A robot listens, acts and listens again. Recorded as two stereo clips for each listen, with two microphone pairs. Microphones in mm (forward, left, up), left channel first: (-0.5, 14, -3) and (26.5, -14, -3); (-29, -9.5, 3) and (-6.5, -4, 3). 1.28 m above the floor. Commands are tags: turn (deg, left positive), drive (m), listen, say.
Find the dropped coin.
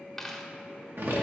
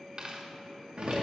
<turn deg="55"/>
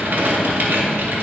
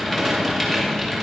<say>I heard a dropped coin from this way, but can't make it out now.</say>